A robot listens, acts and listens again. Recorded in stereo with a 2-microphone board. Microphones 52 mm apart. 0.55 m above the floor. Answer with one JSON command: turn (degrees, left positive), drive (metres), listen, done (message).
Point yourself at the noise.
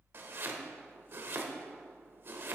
{"turn": -50}
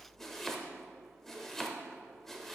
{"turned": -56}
{"done": "Facing the chopping, under 1 m away."}